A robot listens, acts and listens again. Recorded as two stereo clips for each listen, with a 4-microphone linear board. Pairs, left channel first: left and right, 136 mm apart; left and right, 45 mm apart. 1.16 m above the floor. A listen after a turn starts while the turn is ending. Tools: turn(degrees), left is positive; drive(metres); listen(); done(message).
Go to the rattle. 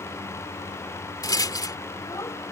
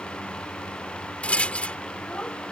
turn(degrees=25)
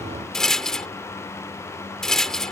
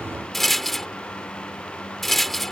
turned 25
drive(metres=1.0)
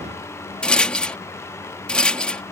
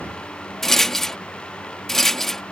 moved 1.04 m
drive(metres=1.0)
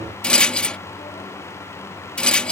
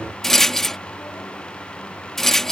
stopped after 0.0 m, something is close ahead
done("Arrived at the rattle, straight ahead.")